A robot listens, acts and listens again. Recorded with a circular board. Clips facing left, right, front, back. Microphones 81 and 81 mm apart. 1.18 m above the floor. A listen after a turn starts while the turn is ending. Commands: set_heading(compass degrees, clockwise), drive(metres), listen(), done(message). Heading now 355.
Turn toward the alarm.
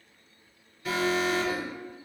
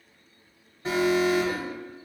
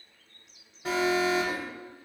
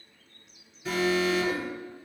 set_heading(25)
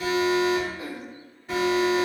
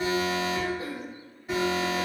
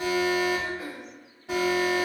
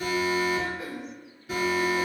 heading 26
done("Facing the alarm.")